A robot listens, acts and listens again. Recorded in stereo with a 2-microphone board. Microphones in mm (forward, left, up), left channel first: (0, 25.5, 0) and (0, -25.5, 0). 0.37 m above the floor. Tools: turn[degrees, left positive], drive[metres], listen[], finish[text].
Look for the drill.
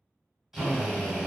Action: turn[-30]
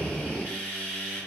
Thought: So it is at 20° left.
Action: turn[20]
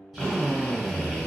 Action: finish[Facing the drill, 1 to 2 m away.]